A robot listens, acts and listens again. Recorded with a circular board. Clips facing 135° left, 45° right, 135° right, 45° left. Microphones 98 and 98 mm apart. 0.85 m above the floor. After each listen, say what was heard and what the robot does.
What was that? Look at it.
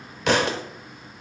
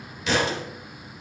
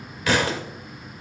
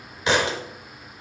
The thud: 110° left. Turn 110° left.
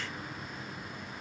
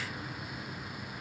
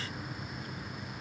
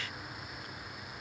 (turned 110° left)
Facing where the thud came from. I can't hear it now.